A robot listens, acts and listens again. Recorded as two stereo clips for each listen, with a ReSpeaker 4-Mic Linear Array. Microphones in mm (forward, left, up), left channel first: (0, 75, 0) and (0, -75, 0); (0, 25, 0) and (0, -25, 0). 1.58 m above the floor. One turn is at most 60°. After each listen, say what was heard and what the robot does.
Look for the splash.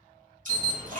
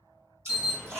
The splash: about 60° right or 120° right. Turn 60° right.
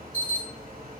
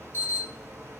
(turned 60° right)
Keep listening.
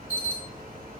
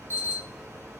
I heard a splash, but can't make it out now. It was about straight ahead or 60° right.